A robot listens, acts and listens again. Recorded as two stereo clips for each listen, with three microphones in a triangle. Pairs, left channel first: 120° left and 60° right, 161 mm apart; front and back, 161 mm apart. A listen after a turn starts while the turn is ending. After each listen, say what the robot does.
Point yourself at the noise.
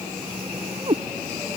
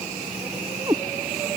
Turn 120° right.
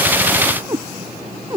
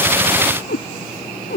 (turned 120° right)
Turn 10° left.
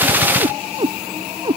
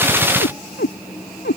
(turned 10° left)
Facing the cat meowing.